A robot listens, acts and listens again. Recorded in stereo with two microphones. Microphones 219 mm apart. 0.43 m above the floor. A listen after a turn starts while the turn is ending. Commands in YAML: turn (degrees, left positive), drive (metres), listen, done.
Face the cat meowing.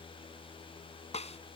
listen: true
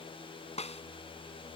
listen: true
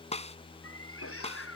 turn: 90
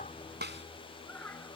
turn: 10
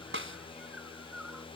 listen: true
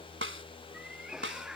done: "Facing the cat meowing."